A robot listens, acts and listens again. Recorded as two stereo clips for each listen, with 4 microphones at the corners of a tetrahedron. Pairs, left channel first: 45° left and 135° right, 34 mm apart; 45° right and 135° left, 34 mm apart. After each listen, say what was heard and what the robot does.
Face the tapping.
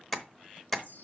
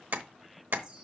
The tapping: 125° left. Turn 125° left.
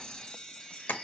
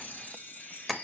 The tapping is now 40° left. Turn 40° left.
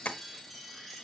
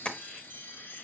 The tapping is now 10° left. Turn 10° left.
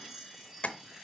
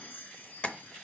Facing the tapping, under 1 m away.